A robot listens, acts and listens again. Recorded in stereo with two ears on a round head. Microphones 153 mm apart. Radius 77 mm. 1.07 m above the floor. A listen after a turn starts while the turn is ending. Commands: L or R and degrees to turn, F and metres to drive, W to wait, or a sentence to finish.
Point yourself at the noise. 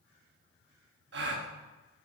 R70
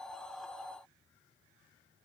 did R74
W
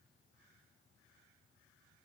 I heard a gasp, but can't make it out now. It was about straight ahead or 35° right.